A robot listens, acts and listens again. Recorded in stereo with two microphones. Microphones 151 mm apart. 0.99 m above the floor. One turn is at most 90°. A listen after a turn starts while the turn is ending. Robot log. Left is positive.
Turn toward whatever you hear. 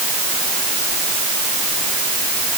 cmd idle
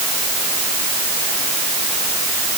cmd idle
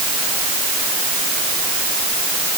end: I can't make out anything.